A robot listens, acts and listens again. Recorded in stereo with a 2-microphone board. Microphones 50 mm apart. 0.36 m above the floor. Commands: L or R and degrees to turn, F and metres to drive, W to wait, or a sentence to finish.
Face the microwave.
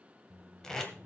R60
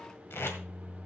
R25
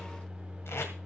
R10
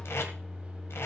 Found it: a microwave, straight ahead, 1 to 2 m away.